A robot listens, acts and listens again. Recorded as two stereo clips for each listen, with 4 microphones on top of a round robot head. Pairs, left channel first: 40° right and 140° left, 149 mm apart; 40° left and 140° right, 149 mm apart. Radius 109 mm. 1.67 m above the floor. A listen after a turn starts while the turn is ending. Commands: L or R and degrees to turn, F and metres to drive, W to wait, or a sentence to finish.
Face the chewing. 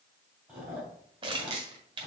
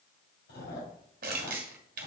L55
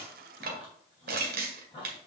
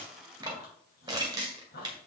L20
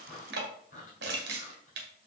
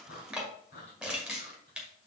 Facing the chewing, 2 to 4 m away.